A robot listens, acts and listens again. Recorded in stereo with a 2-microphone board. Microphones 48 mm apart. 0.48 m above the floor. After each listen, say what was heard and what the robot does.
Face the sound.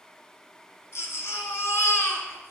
The baby crying: about 65° left or 115° left. Turn 65° left.
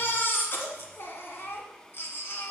So it is at 50° left. Turn 50° left.
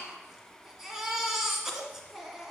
The baby crying is now 10° right. Turn 10° right.
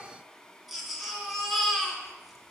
Found it: a baby crying, straight ahead, 1 to 2 m away.